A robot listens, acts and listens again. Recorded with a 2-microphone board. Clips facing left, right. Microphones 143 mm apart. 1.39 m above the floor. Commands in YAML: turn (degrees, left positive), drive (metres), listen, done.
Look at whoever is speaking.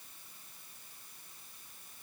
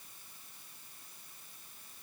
listen: true
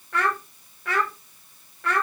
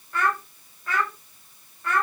turn: 90
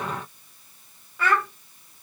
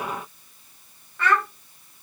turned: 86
done: "Facing the child speaking."